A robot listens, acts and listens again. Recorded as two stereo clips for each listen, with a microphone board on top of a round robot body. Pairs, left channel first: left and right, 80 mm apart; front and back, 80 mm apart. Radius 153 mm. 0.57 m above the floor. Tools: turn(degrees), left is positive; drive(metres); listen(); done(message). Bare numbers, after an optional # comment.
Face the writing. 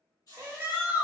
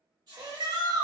# The writing: 135° left.
turn(135)
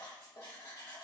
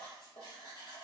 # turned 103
# The writing is now 30° left.
turn(30)
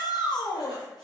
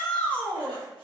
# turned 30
listen()
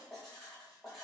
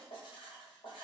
done("Facing the writing, 1 to 2 m away.")